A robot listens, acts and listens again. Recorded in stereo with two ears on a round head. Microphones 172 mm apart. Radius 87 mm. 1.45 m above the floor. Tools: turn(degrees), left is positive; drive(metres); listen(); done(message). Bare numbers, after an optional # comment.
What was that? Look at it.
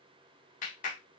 # The clap: about 40° left or 140° left.
turn(40)
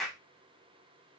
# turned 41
done("Found it: a clap, straight ahead, under 1 m away.")